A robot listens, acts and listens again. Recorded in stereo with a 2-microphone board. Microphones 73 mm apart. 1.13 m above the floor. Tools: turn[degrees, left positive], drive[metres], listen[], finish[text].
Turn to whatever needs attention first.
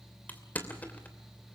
Action: listen[]
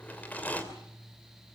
Action: listen[]
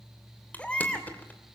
Thought: The baby crying: about 15° left or 165° left.
Action: turn[15]
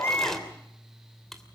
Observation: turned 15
Thought: So it is at 150° left.
Action: turn[150]
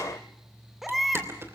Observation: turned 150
Action: finish[Found it: a baby crying, straight ahead, 2 to 4 m away.]